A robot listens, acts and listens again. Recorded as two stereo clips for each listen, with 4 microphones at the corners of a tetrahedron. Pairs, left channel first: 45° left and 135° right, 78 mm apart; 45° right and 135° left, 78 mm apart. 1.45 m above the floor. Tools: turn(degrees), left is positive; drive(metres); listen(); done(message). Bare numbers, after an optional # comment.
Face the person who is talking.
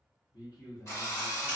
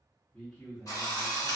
# The man speaking: 40° left.
turn(40)
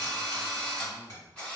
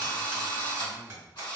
listen()
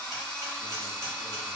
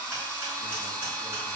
listen()
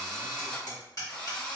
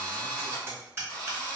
done("Facing where the man speaking came from. I can't hear it now.")